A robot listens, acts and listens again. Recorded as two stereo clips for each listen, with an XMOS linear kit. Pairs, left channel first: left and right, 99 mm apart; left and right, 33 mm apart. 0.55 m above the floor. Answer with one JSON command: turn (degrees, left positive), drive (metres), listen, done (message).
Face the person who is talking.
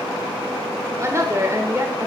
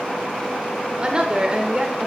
{"turn": -30}
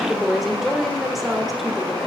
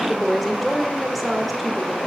{"done": "Facing the woman speaking, 1 to 2 m away."}